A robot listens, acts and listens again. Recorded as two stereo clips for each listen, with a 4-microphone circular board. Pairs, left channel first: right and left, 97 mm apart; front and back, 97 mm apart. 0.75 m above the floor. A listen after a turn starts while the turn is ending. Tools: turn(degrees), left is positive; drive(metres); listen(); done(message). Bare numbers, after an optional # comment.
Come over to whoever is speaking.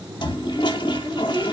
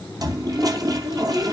# The child speaking: 170° left.
turn(170)
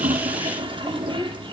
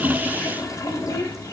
drive(1.0)
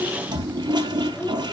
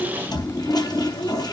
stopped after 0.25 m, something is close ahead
# The child speaking is now 15° right.
turn(-15)
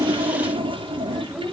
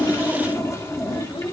done("Blocked. The child speaking is further on, straight ahead.")